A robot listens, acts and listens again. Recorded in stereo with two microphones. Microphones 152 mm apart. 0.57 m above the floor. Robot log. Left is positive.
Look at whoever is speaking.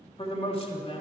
note: The man speaking: about 40° left or 140° left.
cmd yaw +40
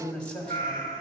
note: So it is at 10° left.
cmd yaw +10
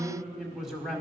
end: Facing the man speaking, 1 to 2 m away.